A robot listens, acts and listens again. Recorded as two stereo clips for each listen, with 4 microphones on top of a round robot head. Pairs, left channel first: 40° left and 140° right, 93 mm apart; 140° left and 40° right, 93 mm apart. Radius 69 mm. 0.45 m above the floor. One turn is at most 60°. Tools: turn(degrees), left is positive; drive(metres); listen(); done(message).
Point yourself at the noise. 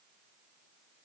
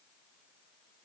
listen()
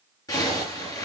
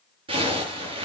turn(degrees=-10)
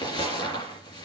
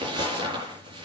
done("Facing the zipper, over 4 m away.")